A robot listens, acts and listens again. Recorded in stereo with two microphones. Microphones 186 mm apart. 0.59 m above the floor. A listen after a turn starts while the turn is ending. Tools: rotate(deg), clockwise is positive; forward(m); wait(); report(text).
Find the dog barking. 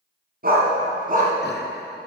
rotate(50)
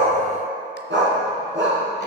rotate(90)
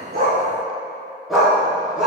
report("Facing the dog barking.")